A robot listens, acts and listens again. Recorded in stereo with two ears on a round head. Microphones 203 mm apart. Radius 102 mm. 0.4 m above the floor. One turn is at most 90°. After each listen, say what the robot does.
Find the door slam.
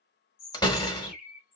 Turn 20° left.
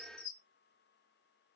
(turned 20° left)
Keep listening.
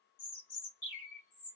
I heard a door slam, but can't make it out now. It was about straight ahead or 140° left.